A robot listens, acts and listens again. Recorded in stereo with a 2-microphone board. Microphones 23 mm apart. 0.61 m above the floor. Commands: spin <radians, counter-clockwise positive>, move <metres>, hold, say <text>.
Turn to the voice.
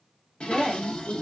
spin -0.44
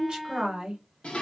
spin -2.18
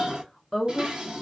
spin 0.26
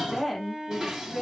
say Facing the woman speaking.